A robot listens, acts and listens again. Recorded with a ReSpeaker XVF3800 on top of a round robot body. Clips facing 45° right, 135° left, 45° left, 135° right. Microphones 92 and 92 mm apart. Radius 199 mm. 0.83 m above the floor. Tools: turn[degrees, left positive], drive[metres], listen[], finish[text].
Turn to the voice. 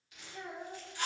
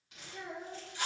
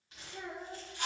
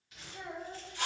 Thought: The child speaking: 55° left.
Action: turn[55]
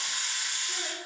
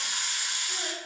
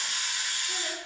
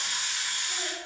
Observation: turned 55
Action: listen[]
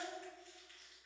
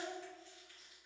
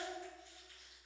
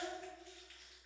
Thought: The child speaking is now 15° left.
Action: turn[15]
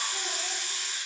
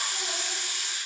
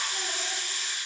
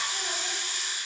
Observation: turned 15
Action: listen[]
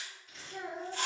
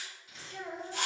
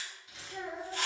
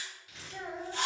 Action: finish[Found it: a child speaking, straight ahead.]